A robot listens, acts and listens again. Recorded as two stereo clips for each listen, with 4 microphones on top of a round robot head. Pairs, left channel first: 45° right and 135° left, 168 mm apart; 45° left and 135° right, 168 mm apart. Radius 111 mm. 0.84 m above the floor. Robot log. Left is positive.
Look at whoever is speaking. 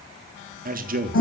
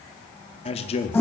note: The man speaking: 100° left.
cmd yaw +100
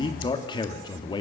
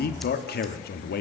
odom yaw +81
note: The man speaking is now 20° left.
cmd yaw +20
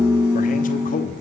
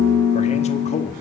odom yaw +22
end: Facing the man speaking.